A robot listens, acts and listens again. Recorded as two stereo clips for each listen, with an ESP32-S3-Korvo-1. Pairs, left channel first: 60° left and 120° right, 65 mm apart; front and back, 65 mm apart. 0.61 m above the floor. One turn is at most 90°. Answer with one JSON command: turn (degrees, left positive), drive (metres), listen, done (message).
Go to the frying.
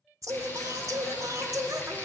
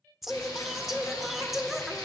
{"drive": 1.0}
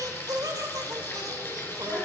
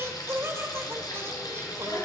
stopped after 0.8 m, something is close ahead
{"turn": 10}
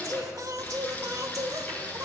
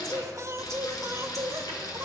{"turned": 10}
{"done": "Blocked. The frying is further on, straight ahead."}